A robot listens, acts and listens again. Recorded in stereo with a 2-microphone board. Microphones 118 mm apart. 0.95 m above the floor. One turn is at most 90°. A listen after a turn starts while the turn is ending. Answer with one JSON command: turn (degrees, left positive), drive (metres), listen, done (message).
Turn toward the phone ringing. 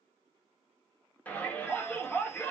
{"listen": true}
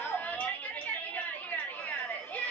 {"listen": true}
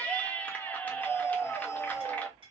{"done": "I can't make out a phone ringing to turn to."}